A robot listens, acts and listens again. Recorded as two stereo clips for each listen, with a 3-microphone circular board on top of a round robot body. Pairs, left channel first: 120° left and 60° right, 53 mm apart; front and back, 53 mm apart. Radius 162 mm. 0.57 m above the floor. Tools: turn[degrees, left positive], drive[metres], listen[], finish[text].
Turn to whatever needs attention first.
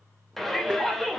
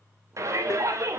Thought: The shout: 155° right.
Action: turn[-155]
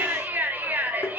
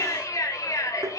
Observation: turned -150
Action: finish[Found it: a shout, straight ahead.]